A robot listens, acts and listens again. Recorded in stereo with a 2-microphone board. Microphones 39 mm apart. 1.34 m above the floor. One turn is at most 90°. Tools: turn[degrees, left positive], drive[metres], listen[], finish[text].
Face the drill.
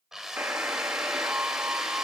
Action: turn[-30]
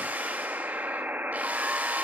Action: listen[]
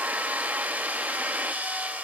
Thought: So it is at 140° right.
Action: turn[-90]
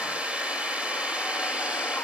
Thought: The drill is now 30° right.
Action: turn[-30]
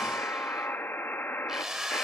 Thought: The drill is now 10° right.
Action: turn[-10]
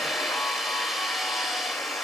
Action: finish[Facing the drill.]